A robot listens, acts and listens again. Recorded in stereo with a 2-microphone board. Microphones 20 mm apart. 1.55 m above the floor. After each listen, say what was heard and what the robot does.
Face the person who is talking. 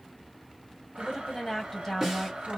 The woman speaking: about 20° left or 160° left. Turn 20° left.
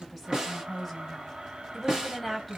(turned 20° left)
Found it: a woman speaking, straight ahead, 2 to 4 m away.